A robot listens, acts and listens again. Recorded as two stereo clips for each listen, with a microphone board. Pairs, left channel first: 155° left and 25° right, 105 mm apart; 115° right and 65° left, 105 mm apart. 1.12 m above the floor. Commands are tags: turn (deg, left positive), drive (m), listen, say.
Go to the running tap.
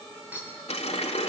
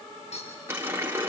<turn deg="135"/>
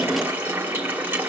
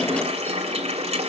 <turn deg="50"/>
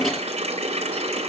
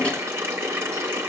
<drive m="1.0"/>
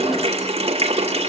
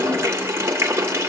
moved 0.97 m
<drive m="1.0"/>
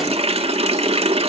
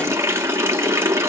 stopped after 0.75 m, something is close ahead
<say>I am next to the running tap.</say>